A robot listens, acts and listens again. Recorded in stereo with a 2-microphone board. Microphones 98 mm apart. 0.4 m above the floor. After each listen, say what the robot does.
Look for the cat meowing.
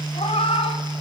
Turn 90° left.
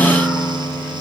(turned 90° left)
Keep listening.
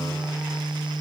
Keep listening.
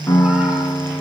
I heard a cat meowing from this way, but can't make it out now.